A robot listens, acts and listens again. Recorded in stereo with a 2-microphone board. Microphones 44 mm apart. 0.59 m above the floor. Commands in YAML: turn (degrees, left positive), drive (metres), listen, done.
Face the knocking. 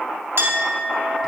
listen: true
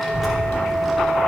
listen: true
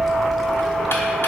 done: "I can't make out knocking, only a clink and a child speaking."